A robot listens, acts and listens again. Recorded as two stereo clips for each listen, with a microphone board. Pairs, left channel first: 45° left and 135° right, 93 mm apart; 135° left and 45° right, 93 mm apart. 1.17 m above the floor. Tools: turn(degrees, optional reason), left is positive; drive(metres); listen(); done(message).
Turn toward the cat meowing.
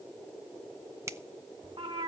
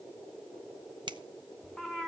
turn(degrees=-135, reason="The cat meowing: 135° right.")
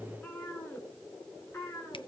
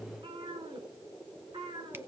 turn(degrees=-20, reason="The cat meowing is now 20° right.")
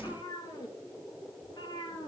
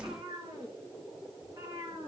done("Found it: a cat meowing, straight ahead.")